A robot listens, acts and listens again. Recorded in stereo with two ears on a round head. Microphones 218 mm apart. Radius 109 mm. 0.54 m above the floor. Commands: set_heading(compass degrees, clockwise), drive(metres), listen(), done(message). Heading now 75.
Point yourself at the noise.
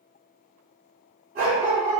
set_heading(115)
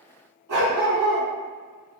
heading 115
set_heading(215)
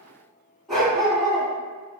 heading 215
done("Found it: a dog barking, straight ahead, 1 to 2 m away.")